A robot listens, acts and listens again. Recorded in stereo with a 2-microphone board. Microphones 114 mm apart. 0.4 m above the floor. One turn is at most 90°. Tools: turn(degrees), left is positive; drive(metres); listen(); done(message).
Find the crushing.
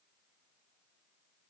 listen()
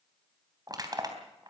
turn(degrees=-35)
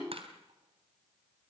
turn(degrees=-90)
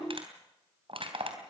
turn(degrees=-60)
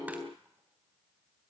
listen()
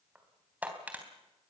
turn(degrees=-15)
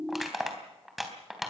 done("Found it: crushing, straight ahead.")